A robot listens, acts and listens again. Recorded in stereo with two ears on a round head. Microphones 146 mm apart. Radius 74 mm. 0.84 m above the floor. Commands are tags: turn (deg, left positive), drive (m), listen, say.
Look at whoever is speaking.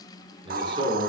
<turn deg="-30"/>
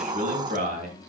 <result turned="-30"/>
<turn deg="-125"/>
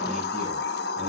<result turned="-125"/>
<listen/>
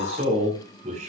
<turn deg="-45"/>
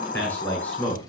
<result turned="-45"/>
<turn deg="10"/>
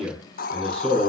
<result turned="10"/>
<say>Found it: a man speaking, straight ahead.</say>